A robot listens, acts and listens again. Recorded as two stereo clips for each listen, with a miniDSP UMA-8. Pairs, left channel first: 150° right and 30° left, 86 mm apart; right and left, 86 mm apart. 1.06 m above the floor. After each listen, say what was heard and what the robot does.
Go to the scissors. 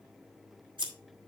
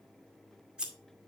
The scissors: 10° left. Turn 10° left.
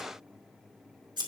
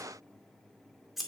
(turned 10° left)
Drive 1.0 m forward.
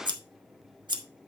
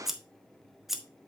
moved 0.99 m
Drive 1.0 m forward.
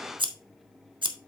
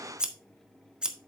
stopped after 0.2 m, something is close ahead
The scissors is now 10° left. Turn 10° left.
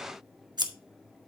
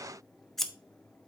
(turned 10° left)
Arrived at the scissors, straight ahead.